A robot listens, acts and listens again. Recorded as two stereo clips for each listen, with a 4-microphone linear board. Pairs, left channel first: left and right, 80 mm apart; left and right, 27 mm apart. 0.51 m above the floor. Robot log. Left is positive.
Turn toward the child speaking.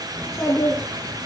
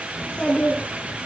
note: The child speaking: about 40° left or 140° left.
cmd yaw +40
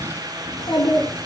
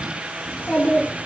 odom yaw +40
note: So it is at 95° left.
cmd yaw +95
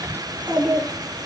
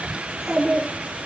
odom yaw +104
note: The child speaking is now 15° right.
cmd yaw -15
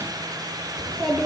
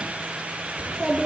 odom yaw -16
end: Found it: a child speaking, straight ahead.